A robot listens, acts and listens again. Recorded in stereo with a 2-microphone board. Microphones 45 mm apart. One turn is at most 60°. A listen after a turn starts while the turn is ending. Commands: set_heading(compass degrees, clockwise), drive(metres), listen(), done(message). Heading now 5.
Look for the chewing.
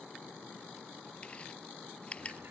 set_heading(335)
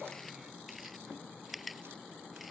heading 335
done("Found it: chewing, straight ahead.")